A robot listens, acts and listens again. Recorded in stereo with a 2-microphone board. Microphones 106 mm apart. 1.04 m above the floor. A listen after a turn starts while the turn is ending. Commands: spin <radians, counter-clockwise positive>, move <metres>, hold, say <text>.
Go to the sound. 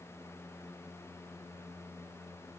hold
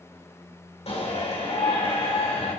spin 1.31
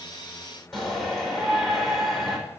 move 1.0
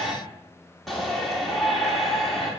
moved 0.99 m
move 1.0
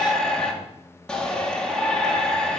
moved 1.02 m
spin 0.17
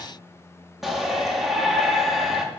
move 1.0
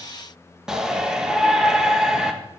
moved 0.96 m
move 1.0
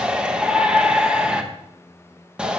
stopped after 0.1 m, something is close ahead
spin -0.17
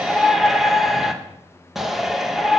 say Arrived at the shout, straight ahead.